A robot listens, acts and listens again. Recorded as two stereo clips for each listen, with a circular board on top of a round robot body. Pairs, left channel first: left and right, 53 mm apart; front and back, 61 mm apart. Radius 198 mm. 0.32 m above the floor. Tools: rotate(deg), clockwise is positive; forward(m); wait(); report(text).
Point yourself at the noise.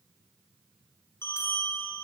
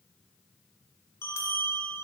rotate(-50)
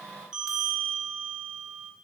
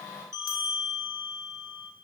rotate(15)
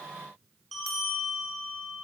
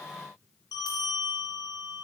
report("Found it: a bell, straight ahead, under 1 m away.")